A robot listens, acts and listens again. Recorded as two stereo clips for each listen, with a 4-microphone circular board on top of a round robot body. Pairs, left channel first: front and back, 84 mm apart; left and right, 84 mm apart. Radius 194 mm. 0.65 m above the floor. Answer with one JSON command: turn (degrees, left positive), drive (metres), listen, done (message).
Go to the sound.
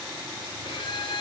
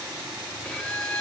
{"turn": 10}
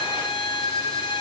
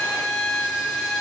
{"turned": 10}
{"drive": 1.0}
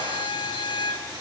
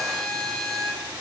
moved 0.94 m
{"drive": 1.0}
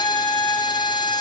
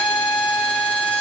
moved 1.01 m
{"turn": 10}
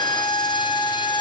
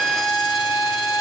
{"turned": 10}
{"drive": 1.0}
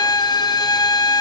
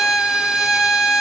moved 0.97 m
{"turn": -10}
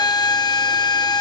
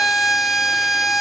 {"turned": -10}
{"drive": 1.0}
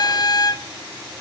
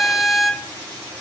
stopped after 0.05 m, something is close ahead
{"done": "I am next to the violin."}